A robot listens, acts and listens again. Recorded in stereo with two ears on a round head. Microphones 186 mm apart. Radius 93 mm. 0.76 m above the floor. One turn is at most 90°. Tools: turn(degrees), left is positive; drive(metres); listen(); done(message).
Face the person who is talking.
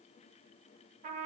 listen()
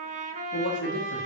turn(degrees=55)
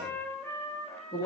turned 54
turn(degrees=20)
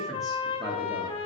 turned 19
done("Facing the man speaking, 1 to 2 m away.")